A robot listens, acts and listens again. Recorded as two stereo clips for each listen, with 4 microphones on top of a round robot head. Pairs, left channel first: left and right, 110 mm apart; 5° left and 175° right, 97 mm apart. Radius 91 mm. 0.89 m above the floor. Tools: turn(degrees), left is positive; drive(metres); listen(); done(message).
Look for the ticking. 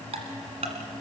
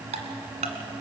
turn(degrees=-140)
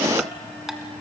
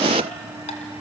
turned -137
listen()
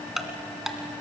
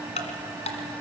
done("Facing the ticking.")